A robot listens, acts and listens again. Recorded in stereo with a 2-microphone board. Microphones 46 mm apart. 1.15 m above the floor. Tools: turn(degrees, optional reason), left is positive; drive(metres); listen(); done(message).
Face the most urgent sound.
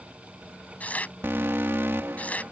turn(degrees=-55, reason="The alarm: about 55° right or 125° right.")
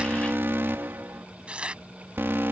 turn(degrees=-60, reason="So it is at 60° right.")
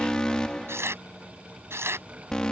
turn(degrees=20, reason="The alarm is now 20° left.")
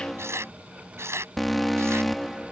done("Found it: an alarm, straight ahead.")